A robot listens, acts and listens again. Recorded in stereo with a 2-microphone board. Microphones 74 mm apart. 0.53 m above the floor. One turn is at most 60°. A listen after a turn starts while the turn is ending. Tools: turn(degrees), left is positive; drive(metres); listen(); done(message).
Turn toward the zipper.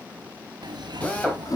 turn(degrees=-60)
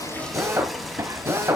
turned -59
turn(degrees=-40)
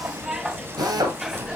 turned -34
turn(degrees=-10)
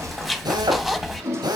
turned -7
done("Found it: a zipper, straight ahead, under 1 m away.")